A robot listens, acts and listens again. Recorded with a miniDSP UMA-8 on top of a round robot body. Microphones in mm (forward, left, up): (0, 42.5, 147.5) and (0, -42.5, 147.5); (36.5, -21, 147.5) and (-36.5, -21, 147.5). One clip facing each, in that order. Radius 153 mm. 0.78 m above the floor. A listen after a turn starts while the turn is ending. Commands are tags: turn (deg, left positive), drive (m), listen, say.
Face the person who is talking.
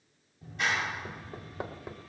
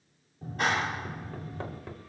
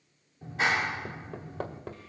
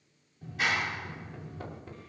<listen/>
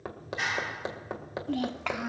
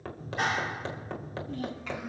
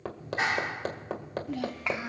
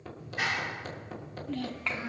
<turn deg="75"/>
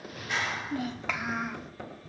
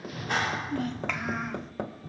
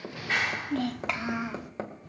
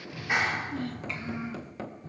<say>Facing the child speaking, 1 to 2 m away.</say>